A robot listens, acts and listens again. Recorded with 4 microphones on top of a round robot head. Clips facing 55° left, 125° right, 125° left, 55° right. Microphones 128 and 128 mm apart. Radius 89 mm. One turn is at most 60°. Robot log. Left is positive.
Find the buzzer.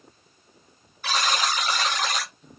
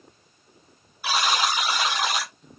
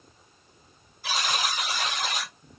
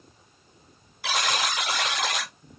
note: The buzzer: 45° right.
cmd yaw -45
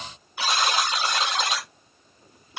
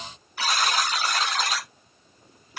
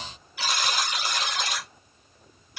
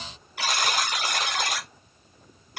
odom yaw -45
note: The buzzer is now 15° right.
cmd yaw -15
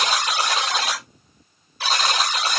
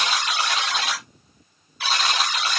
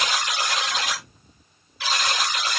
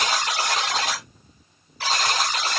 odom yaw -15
end: Facing the buzzer, 1 to 2 m away.